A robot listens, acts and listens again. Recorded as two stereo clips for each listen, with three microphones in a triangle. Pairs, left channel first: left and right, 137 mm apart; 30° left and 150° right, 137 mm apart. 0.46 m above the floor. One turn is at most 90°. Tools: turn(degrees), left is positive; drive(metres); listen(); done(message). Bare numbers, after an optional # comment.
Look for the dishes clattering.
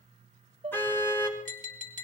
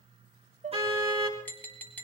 # The dishes clattering: 130° right.
turn(-90)
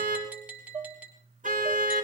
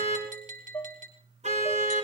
# The dishes clattering is now 45° right.
turn(-45)
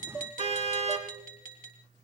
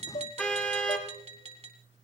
# The dishes clattering is now 15° left.
turn(15)
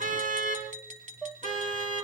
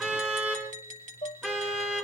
done("Facing the dishes clattering.")